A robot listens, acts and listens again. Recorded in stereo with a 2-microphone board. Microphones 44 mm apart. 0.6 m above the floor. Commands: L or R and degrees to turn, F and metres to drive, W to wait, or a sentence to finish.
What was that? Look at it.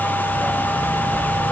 L30
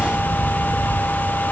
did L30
L155
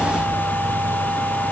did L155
Facing the dog barking.